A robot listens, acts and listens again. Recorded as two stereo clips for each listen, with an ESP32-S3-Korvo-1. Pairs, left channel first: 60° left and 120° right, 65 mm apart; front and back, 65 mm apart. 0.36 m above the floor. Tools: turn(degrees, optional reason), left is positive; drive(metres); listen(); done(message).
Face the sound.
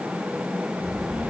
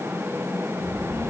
turn(degrees=155, reason="The child speaking: 155° left.")
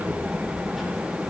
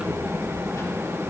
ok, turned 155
turn(degrees=-35, reason="The child speaking is now 35° right.")
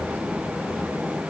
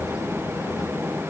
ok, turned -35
listen()
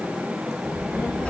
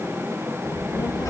turn(degrees=-10, reason="The child speaking is now 10° right.")
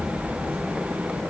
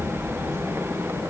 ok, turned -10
done("Found it: a child speaking, straight ahead, over 4 m away.")